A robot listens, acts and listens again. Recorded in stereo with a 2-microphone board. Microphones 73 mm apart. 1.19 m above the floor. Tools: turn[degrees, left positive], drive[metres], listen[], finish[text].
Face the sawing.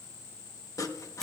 Thought: The sawing: about 50° left or 130° left.
Action: turn[50]
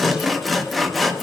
Action: finish[Found it: sawing, straight ahead, 1 to 2 m away.]